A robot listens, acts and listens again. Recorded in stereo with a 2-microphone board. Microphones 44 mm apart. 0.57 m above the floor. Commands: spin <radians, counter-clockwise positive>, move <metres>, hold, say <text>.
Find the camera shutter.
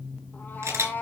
spin -1.57
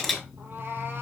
say Facing the camera shutter, over 4 m away.